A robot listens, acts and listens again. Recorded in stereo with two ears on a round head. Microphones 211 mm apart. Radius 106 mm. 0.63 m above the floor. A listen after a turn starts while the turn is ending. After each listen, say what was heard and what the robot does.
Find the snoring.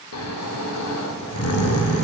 The snoring: about 70° left or 110° left. Turn 70° left.
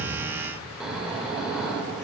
Facing the snoring, under 1 m away.